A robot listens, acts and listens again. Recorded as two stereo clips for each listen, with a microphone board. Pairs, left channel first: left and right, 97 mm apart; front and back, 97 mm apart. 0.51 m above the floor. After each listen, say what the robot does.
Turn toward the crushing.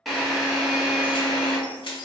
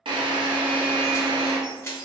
Turn 60° left.
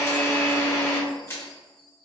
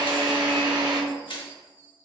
Turn 25° left.
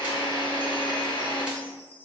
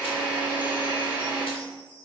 Keep listening.
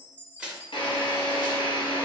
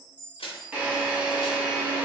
Turn 10° right.
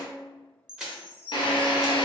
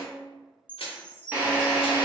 Facing the crushing.